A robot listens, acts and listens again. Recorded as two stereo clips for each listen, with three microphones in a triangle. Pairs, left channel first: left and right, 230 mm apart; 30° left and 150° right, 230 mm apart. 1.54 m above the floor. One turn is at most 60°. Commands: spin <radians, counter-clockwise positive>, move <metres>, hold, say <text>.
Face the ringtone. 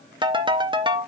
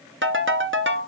spin -1.05
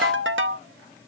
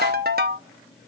spin -1.05
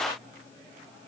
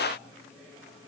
spin -0.79
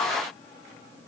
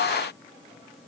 hold
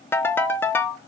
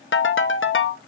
spin 0.17
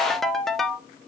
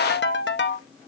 say Found it: a ringtone, straight ahead, under 1 m away.